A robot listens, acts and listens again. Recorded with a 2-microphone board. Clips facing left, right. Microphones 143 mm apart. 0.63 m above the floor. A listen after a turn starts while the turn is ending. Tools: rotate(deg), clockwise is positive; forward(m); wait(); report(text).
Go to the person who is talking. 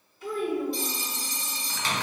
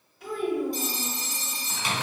rotate(90)
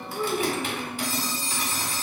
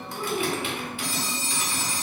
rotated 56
rotate(35)
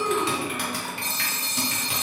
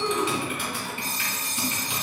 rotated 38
wait()
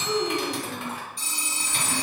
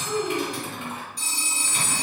forward(1.0)
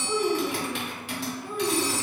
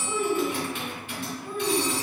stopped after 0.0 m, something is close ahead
report("Blocked. The child speaking is further on, straight ahead.")